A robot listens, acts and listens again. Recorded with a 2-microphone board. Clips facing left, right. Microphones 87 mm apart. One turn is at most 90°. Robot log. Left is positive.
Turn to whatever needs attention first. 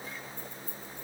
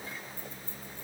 cmd idle
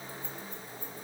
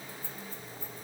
cmd idle
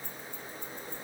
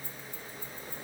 end: I can't make out anything urgent, only keys jangling.